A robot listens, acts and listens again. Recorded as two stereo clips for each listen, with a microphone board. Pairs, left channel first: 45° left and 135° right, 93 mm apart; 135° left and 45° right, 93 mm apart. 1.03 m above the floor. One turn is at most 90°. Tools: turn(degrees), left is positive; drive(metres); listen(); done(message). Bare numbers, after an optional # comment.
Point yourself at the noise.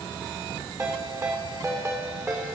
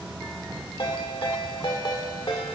# The ringtone: 170° left.
turn(90)
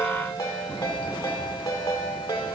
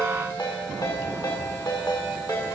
# The ringtone is now 95° left.
turn(90)
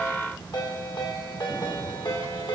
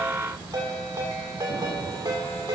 done("Found it: a ringtone, straight ahead.")